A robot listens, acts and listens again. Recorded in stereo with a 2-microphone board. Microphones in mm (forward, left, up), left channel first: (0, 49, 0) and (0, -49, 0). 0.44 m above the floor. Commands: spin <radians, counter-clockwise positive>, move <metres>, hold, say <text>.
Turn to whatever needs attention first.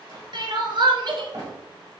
spin -1.05
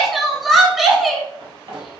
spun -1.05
say Facing the crying, under 1 m away.